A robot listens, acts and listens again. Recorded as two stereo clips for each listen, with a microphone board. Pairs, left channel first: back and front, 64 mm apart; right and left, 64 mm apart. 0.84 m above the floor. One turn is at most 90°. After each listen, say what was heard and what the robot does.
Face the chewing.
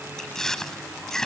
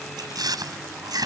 The chewing: 95° left. Turn 90° left.
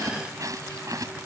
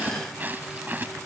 The chewing is now 30° left. Turn 30° left.
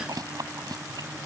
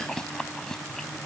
The chewing is now 10° right. Turn 10° right.
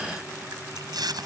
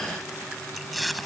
Facing the chewing.